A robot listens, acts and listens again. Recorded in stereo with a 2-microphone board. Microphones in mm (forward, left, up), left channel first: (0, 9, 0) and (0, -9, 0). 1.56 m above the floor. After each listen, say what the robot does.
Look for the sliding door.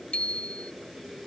Keep listening.
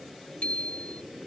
Keep listening.
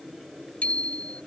I can't make out a sliding door to turn to.